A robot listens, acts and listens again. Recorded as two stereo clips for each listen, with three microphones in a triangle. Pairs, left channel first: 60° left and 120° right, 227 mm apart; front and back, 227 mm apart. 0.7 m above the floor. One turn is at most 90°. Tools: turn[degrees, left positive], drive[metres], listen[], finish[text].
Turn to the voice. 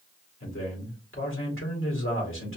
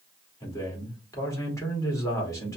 Thought: The man speaking: 75° left.
Action: turn[75]
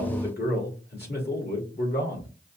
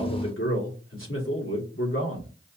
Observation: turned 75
Thought: The man speaking is now 20° left.
Action: turn[20]
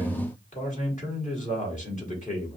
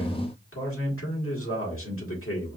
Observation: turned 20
Action: finish[Facing the man speaking.]